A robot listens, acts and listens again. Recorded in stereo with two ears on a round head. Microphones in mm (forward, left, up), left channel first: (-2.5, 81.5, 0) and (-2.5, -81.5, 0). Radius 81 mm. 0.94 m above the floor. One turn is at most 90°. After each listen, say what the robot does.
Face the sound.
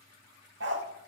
Turn 70° right.
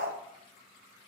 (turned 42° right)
Turn 55° right.
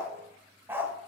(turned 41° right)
Turn 15° right.
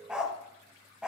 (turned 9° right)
Facing the dog barking.